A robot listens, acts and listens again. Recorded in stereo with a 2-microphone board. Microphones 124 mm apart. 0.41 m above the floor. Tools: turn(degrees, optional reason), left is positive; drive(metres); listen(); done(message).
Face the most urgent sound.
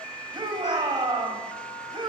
turn(degrees=-35, reason="The shout: about 35° right or 145° right.")
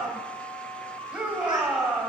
turn(degrees=-10, reason="So it is at 10° right.")
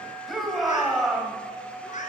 done("Facing the shout, 2 to 4 m away.")